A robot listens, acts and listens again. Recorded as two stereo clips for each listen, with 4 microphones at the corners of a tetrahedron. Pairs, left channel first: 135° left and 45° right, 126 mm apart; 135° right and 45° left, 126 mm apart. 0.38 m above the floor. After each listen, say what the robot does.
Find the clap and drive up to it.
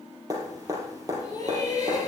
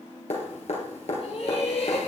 Keep listening.
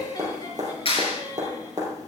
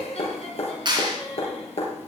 Turn 95° left.
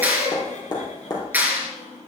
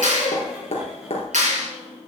Turn 30° left.
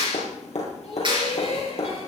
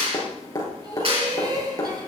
Drive 1.0 m forward.
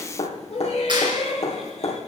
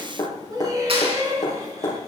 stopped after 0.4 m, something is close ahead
Blocked. The clap is further on, straight ahead.